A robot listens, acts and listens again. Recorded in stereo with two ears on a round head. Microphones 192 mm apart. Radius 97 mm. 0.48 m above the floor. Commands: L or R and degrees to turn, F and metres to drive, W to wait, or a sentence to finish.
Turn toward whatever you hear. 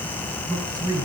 R15
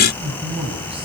R25
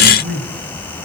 R140
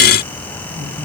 W
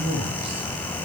R25
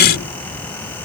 W
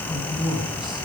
Found it: a man speaking, straight ahead, over 4 m away.